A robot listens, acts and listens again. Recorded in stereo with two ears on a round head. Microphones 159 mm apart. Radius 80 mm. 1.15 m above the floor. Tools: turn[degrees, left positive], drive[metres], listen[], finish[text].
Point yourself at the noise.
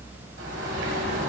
Thought: The bird: about 70° right or 110° right.
Action: turn[-70]
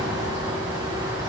Thought: So it is at 25° right.
Action: turn[-25]
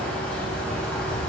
Action: finish[Found it: a bird, straight ahead.]